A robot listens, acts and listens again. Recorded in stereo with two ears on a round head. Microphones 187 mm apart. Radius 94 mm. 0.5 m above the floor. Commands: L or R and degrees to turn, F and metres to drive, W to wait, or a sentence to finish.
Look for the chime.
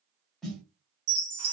R55
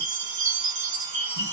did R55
R20
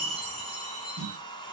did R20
Found it: a chime, straight ahead, 1 to 2 m away.